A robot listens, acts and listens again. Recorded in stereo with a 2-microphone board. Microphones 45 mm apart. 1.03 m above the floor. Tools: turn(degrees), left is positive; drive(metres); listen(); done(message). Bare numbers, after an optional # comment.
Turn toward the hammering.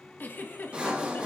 listen()
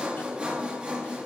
listen()
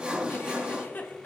done("I can't make out hammering, only a giggle and sawing.")